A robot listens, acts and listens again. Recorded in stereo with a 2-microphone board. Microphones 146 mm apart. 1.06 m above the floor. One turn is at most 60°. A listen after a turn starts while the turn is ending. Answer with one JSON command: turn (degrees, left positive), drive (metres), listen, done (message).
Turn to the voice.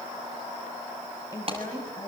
{"turn": 25}
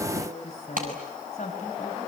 {"turn": 60}
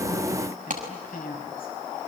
{"turn": 60}
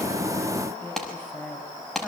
{"turn": 15}
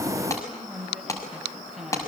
{"done": "Found it: a woman speaking, straight ahead."}